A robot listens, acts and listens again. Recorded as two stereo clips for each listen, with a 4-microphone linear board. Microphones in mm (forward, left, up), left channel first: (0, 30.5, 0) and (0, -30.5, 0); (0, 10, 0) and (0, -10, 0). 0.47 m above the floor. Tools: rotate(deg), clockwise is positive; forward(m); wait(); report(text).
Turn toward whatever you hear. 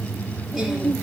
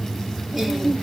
rotate(30)
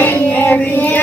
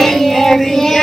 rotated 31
rotate(-25)
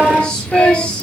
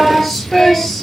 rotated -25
rotate(-15)
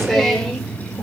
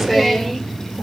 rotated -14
report("Facing the singing, 2 to 4 m away.")